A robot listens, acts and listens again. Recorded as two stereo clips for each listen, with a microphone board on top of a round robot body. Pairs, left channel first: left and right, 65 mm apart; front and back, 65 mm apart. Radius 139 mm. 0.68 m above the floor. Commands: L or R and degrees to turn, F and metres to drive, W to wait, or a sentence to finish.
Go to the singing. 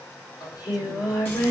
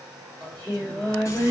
L70
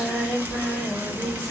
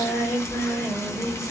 F1.0
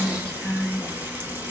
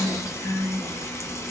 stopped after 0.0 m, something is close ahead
L10
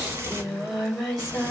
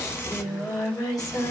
Blocked. The singing is further on, straight ahead.